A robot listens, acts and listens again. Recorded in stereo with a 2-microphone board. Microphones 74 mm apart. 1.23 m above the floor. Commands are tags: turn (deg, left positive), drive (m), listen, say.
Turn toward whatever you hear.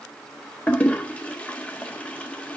<turn deg="15"/>
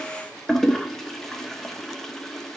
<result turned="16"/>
<say>Found it: a toilet flushing, straight ahead.</say>